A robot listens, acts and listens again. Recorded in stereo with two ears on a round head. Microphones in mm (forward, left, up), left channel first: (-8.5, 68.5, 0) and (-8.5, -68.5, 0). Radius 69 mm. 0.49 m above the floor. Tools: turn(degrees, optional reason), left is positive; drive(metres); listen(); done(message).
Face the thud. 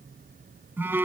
listen()
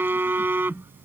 listen()
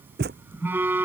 turn(degrees=-70, reason="The thud: about 70° right or 110° right.")
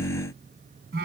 listen()
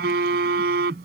done("I heard a thud, but can't make it out now. It was about straight ahead or 40° right.")